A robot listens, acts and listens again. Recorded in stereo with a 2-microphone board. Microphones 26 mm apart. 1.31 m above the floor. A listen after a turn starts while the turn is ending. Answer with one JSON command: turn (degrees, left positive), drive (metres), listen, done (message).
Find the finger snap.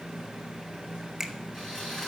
{"turn": -15}
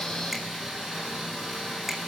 {"listen": true}
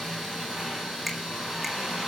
{"listen": true}
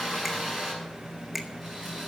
{"done": "I heard a finger snap, but can't make it out now. It was about straight ahead or 150° right."}